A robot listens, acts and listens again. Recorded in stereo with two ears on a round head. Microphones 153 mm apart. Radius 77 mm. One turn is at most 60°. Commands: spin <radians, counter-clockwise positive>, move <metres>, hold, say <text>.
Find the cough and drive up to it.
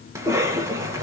spin -0.26
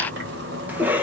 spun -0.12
spin -0.52
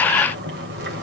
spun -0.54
hold
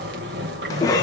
spin 0.35
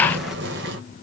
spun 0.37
hold
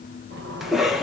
move 1.0
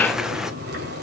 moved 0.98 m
move 1.0
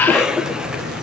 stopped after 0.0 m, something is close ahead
say Arrived at the cough, straight ahead.